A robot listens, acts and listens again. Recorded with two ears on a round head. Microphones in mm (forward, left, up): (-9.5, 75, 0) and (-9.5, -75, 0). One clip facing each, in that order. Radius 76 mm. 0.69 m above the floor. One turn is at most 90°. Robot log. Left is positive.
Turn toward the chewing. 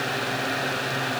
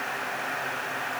cmd idle
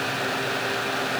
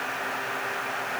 cmd idle
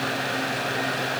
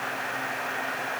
end: I can't make out chewing.